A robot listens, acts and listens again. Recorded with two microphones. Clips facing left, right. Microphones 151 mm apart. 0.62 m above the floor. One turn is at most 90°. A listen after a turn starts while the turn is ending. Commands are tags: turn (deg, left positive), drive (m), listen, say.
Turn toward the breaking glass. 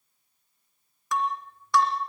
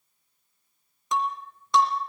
<turn deg="-20"/>
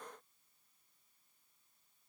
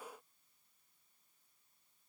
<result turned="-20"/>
<listen/>
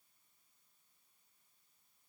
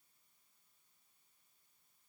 <say>I heard breaking glass, but can't make it out now. It was about straight ahead or 140° right.</say>